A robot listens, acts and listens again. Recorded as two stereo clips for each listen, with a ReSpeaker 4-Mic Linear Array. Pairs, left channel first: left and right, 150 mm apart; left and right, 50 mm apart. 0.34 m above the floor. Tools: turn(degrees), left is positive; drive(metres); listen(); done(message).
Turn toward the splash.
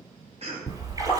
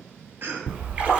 turn(degrees=-25)
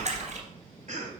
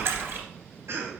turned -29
turn(degrees=-125)
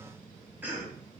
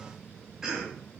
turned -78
turn(degrees=-50)
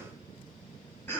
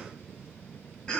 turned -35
turn(degrees=-15)
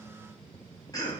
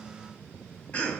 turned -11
done("Facing where the splash came from. I can't hear it now.")